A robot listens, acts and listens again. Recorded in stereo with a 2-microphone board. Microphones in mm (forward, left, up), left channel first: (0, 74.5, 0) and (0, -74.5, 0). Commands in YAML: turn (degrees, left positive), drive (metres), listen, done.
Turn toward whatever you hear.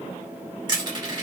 turn: -30
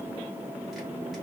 listen: true
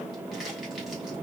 listen: true
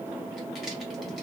done: "I heard crushing, but can't make it out now. It was about straight ahead or 120° right."